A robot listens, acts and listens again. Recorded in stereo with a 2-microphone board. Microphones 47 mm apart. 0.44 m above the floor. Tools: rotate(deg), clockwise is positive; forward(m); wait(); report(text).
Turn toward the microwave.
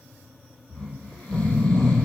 wait()
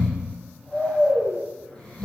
wait()
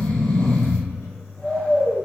rotate(-65)
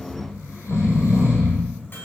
rotate(-50)
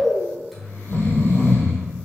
report("Found it: a microwave, straight ahead, 2 to 4 m away.")